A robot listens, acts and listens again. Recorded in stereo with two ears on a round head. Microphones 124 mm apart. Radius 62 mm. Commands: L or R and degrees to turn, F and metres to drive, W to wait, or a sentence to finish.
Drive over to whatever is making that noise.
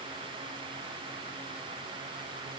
W
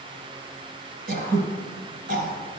R70
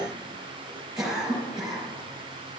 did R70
F1.0
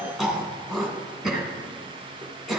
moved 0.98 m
F1.0
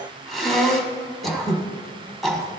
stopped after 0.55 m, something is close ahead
Arrived at the throat clearing, straight ahead.